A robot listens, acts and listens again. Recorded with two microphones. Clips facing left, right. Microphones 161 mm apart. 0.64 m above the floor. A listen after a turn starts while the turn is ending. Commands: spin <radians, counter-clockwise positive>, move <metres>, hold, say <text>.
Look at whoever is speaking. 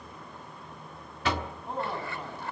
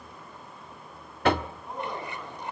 spin 0.52
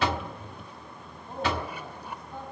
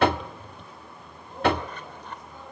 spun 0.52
spin 2.09
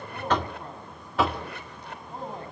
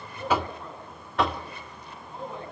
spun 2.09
spin 0.70
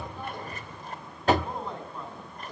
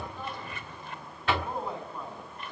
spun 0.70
say Found it: a man speaking, straight ahead, over 4 m away.